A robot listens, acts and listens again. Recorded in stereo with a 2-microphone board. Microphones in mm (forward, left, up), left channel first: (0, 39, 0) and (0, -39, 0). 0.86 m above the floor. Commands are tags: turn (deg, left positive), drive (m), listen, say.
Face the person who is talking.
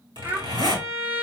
<turn deg="-30"/>
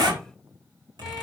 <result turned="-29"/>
<listen/>
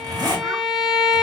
<listen/>
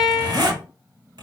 <say>I heard a child speaking, but can't make it out now. It was about straight ahead or 125° right.</say>